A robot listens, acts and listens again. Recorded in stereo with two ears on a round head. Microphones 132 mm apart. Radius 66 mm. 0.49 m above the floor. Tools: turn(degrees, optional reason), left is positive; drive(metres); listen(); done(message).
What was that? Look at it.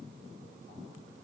listen()
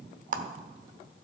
turn(degrees=-55, reason="The clap: about 55° right or 125° right.")
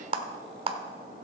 turn(degrees=-45, reason="So it is at 45° right.")
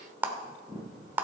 turn(degrees=-15, reason="The clap is now 15° right.")
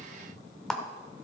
done("Found it: a clap, straight ahead.")